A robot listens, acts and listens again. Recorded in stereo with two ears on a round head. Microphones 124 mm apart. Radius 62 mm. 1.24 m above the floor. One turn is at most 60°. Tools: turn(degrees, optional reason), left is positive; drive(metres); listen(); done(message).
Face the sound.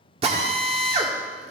turn(degrees=-45, reason="The drill: about 45° right or 135° right.")
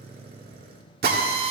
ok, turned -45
turn(degrees=-60, reason="So it is at 90° right.")
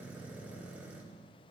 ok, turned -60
turn(degrees=-30, reason="Nothing new. It was at 30° right.")
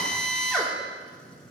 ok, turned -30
done("Facing the drill.")